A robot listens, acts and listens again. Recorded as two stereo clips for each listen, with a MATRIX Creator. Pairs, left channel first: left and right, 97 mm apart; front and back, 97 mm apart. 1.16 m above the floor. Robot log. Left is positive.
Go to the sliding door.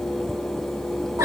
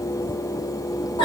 cmd idle
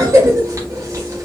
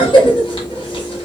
cmd idle
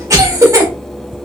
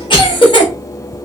end: I can't make out a sliding door, only a cough.